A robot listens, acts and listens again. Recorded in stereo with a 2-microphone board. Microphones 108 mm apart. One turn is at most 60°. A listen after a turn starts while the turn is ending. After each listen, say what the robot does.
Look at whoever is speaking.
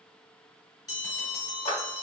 Keep listening.
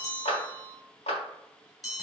Keep listening.
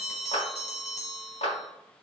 I can't make out anyone speaking, only a clap and a bell.